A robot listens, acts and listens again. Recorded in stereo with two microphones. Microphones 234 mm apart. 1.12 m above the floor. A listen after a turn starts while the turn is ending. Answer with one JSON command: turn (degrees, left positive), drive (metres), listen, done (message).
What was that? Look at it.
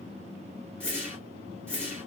{"turn": 30}
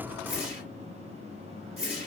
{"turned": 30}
{"turn": -25}
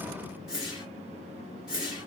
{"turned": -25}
{"done": "Facing the whoosh."}